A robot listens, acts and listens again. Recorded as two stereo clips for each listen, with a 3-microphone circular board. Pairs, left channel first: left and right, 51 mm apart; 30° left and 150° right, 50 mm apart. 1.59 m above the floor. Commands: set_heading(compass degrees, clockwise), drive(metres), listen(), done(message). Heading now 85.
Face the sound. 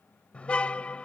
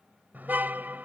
set_heading(290)
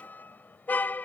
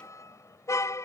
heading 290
set_heading(255)
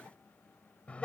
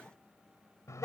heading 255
set_heading(235)
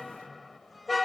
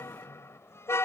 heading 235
done("Facing the car horn.")